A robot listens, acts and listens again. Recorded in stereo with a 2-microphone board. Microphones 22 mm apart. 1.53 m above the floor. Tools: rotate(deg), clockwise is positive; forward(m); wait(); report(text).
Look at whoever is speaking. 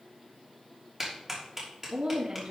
rotate(65)
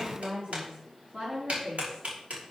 rotate(55)
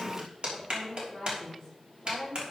rotate(10)
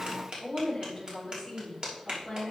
report("Found it: a woman speaking, straight ahead, over 4 m away.")